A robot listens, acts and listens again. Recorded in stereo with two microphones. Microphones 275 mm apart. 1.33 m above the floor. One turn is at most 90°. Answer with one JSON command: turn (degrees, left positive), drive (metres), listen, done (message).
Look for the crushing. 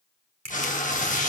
{"turn": -65}
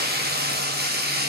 {"listen": true}
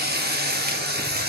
{"listen": true}
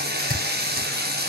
{"done": "I heard crushing, but can't make it out now. It was about straight ahead or 50° right."}